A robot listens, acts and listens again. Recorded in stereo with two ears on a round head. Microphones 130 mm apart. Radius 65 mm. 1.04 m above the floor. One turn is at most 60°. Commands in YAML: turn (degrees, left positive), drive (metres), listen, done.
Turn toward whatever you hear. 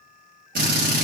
turn: -60
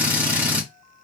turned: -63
turn: -10
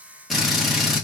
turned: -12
done: "Facing the drill, 1 to 2 m away."